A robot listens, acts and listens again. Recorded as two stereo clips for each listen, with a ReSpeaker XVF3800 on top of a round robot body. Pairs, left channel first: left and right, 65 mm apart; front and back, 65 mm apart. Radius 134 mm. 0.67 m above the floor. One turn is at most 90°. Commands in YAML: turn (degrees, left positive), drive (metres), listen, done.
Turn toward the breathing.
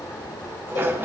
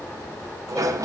listen: true
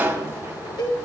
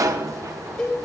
listen: true
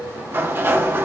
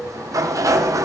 done: "I can't make out breathing, only a cowbell and a sliding door."